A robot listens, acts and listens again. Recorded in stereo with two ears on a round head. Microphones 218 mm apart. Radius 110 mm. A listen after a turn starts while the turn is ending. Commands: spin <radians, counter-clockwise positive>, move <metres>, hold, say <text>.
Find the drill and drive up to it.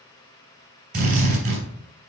spin -0.70
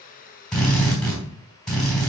move 1.0
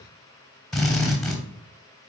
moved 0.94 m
move 1.0
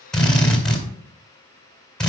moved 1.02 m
move 1.0
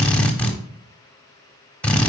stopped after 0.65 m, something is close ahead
say I am next to the drill.